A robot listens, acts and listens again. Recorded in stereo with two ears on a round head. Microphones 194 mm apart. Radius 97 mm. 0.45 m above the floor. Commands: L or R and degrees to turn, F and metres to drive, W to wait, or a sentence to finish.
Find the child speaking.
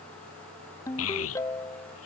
L70
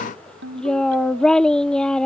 Facing the child speaking.